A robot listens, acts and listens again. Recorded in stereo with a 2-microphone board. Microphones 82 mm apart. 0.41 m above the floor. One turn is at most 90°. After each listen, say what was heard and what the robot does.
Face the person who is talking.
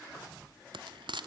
Keep listening.
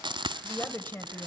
The woman speaking: about 25° left or 155° left. Turn 25° left.
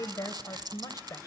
So it is at 125° left. Turn 90° left.
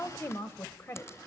The woman speaking is now 40° left. Turn 40° left.
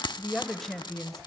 Found it: a woman speaking, straight ahead.